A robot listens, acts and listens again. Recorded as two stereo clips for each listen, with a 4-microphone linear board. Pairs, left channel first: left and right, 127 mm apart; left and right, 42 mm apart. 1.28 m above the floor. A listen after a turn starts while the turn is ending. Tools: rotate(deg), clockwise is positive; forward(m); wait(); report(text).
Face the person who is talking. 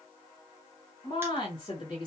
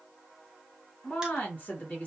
rotate(-40)
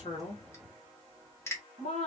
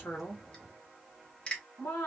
rotate(-100)
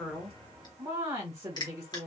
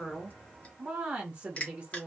rotate(25)
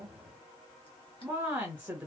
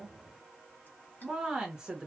rotate(10)
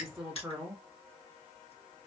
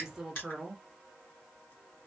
report("Found it: a woman speaking, straight ahead, 1 to 2 m away.")